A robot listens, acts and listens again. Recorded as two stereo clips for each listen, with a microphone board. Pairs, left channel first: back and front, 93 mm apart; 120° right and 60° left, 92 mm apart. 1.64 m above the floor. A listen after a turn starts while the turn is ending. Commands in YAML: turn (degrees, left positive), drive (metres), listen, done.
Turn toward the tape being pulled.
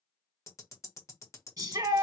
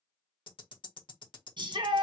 listen: true
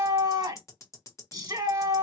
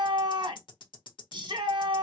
listen: true
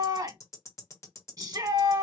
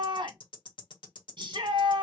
done: "I can't make out tape being pulled to turn to."